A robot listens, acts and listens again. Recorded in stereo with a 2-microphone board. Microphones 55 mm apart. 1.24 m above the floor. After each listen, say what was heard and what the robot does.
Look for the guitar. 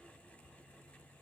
Keep listening.
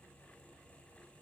Keep listening.
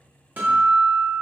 The guitar: about 35° right or 145° right. Turn 35° right.
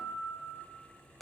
Facing the guitar, 1 to 2 m away.